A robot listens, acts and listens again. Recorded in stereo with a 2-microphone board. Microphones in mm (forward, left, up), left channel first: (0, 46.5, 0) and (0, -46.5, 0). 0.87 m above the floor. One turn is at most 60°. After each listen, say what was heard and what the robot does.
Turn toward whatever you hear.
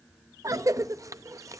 The cough: about 35° right or 145° right. Turn 35° right.
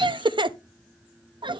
So it is at 105° right. Turn 60° right.
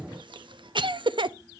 The cough is now 75° right. Turn 60° right.
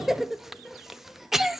Found it: a cough, straight ahead.